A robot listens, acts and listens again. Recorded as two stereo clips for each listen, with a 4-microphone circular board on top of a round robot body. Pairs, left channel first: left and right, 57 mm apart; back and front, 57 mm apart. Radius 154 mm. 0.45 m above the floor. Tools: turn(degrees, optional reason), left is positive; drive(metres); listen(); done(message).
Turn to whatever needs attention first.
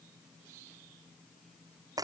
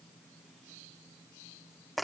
listen()
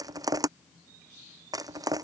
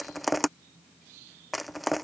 listen()
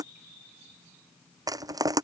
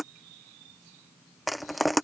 done("I can't make out anything urgent to turn to.")